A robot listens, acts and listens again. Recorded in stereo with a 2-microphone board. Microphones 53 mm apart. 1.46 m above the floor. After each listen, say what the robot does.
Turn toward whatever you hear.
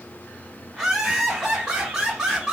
Turn 30° right.
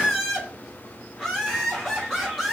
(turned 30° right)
Turn 10° left.
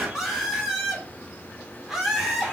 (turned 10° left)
Facing the laughter.